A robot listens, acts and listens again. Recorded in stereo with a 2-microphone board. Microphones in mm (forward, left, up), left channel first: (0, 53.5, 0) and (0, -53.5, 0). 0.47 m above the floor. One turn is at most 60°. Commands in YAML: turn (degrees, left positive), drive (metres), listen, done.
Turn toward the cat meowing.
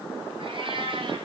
turn: -50
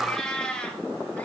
turn: 10
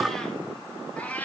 turn: 15
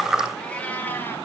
turn: 15
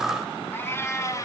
turn: 30
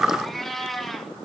done: "Facing the cat meowing, 1 to 2 m away."